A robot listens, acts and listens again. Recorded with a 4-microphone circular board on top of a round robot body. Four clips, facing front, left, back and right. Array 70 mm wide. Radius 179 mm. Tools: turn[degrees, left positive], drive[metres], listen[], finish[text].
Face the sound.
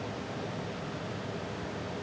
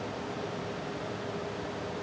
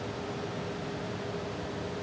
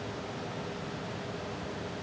Action: listen[]
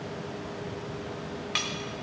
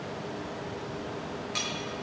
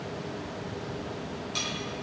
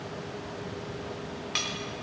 Thought: The cutlery clinking: 20° right.
Action: turn[-20]
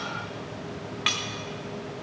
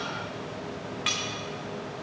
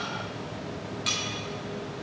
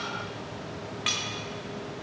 Action: finish[Found it: cutlery clinking, straight ahead, 1 to 2 m away.]